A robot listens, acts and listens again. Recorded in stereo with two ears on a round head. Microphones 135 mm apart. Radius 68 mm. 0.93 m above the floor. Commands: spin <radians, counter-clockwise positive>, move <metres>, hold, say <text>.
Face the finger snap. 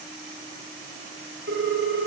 hold
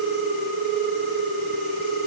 hold
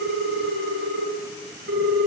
say I can't make out a finger snap, only a ringtone.